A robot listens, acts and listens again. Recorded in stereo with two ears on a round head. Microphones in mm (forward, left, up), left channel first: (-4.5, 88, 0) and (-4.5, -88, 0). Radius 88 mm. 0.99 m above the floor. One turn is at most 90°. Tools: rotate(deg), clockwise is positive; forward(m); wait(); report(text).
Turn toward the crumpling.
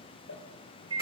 rotate(-65)
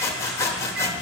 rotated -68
wait()
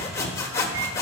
wait()
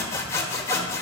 report("I heard crumpling, but can't make it out now. It was about 5° right or 45° left.")